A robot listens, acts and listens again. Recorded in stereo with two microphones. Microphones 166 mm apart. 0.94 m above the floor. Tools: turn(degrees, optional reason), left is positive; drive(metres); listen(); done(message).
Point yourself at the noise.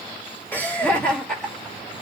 turn(degrees=30)
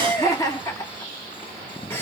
turn(degrees=30)
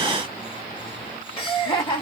turn(degrees=150, reason="So it is at 150° left.")
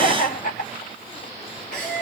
turn(degrees=50, reason="The laughter is now 50° left.")
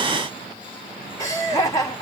turn(degrees=20, reason="The laughter is now 20° left.")
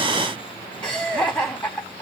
done("Facing the laughter.")